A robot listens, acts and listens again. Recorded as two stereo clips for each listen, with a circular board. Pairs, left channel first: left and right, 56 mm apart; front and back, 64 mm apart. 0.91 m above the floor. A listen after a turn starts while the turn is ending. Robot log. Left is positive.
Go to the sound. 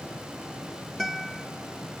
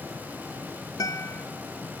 cmd fwd 1.0
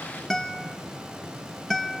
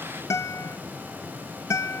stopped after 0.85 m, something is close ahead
note: The guitar is now 10° left.
cmd yaw +10
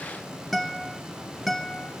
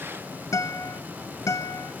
end: Arrived at the guitar, straight ahead.